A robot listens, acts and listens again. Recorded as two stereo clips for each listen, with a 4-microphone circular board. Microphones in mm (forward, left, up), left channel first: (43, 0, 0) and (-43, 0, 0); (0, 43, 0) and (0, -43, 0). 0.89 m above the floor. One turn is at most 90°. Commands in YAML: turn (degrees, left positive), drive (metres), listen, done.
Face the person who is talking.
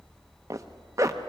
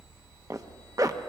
listen: true
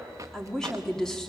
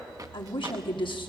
turn: 85
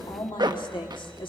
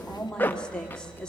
turn: 10
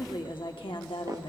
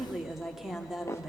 done: "Found it: a woman speaking, straight ahead, 1 to 2 m away."